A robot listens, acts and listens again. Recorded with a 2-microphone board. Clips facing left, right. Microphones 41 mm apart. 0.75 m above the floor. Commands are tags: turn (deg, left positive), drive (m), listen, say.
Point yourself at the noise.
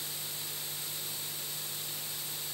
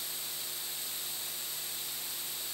<listen/>
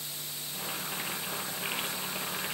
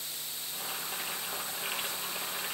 <turn deg="20"/>
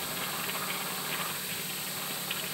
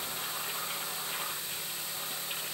<turn deg="145"/>
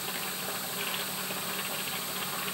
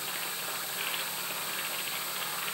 <turn deg="-10"/>
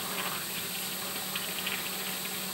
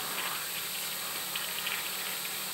<say>Found it: boiling, straight ahead.</say>